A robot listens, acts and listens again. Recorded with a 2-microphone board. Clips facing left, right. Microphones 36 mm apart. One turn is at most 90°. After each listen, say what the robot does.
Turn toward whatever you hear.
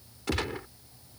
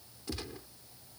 Turn 90° left.
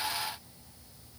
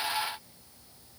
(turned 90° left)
I heard a gunshot from this way, but can't make it out now.